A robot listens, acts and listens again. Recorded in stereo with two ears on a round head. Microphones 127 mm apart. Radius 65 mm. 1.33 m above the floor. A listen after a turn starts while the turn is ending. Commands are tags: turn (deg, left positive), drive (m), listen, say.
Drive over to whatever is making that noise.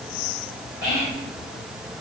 <turn deg="90"/>
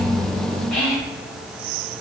<drive m="1.0"/>
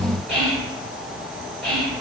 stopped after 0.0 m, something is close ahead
<say>Something is in my way. I am facing the whispering but have not reached it.</say>